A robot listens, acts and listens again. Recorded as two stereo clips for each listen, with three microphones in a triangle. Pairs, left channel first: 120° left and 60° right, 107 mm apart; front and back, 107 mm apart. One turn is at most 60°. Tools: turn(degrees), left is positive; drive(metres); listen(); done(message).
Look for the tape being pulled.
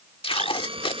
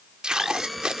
turn(degrees=60)
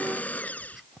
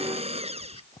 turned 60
turn(degrees=40)
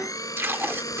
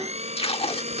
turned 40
done("Found it: tape being pulled, straight ahead.")